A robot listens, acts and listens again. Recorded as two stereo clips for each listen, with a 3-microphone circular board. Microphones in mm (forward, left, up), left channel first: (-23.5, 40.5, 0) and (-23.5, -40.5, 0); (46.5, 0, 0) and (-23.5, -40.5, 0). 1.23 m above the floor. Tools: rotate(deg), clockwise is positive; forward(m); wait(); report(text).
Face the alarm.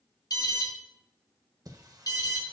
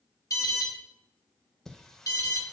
rotate(-65)
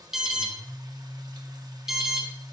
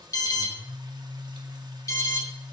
report("Found it: an alarm, straight ahead.")